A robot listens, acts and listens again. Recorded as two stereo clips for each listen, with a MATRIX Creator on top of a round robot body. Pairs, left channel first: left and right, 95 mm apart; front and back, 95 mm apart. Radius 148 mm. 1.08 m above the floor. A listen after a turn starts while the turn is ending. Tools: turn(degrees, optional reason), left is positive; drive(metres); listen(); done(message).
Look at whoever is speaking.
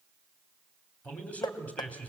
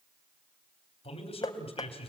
turn(degrees=15, reason="The man speaking: 15° left.")
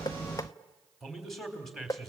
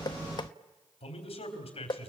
done("Facing the man speaking, 2 to 4 m away.")